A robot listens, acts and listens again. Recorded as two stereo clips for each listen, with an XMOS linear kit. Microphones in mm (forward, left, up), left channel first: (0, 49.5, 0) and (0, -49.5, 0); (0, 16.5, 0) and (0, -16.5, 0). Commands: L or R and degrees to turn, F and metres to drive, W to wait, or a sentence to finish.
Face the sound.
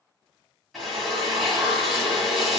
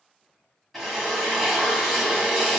L30
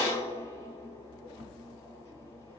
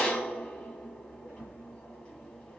L150
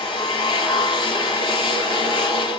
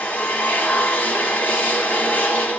L65
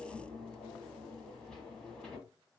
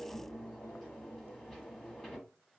W
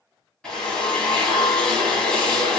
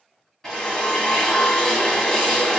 L10
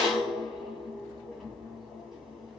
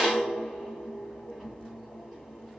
Facing the drill, 1 to 2 m away.